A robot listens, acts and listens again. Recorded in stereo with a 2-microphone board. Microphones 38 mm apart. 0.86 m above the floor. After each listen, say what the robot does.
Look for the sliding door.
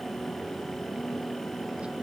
Keep listening.
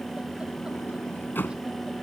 Turn 60° left.
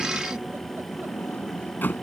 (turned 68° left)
Turn 55° left.
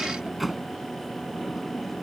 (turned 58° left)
Found it: a sliding door, straight ahead.